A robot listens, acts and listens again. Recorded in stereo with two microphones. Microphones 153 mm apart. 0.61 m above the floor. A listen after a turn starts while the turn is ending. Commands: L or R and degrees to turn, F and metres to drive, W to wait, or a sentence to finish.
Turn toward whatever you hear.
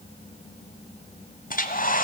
L65
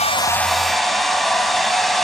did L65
Found it: a hair dryer, straight ahead, 1 to 2 m away.